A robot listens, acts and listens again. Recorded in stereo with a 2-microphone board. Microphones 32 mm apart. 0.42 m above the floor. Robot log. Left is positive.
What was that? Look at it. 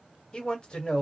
note: The man speaking: about 30° left or 150° left.
cmd yaw +30
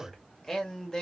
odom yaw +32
note: So it is at 15° left.
cmd yaw +15
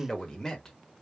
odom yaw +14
note: The man speaking is now 15° left.
cmd yaw +15
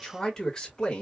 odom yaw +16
note: The man speaking is now 25° left.
cmd yaw +25
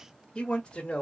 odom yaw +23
note: The man speaking is now 30° left.
cmd yaw +30
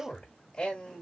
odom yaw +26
note: The man speaking is now 15° left.
cmd yaw +15
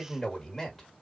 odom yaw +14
end: Found it: a man speaking, straight ahead, 1 to 2 m away.